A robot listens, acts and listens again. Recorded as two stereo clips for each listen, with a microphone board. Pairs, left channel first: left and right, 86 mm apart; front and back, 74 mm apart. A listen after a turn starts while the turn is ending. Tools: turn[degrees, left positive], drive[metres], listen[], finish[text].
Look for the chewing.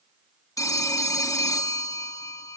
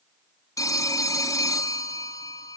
Action: listen[]
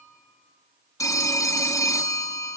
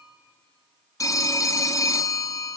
Action: listen[]
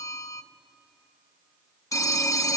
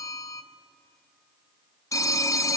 Action: finish[I can't make out chewing, only a phone ringing.]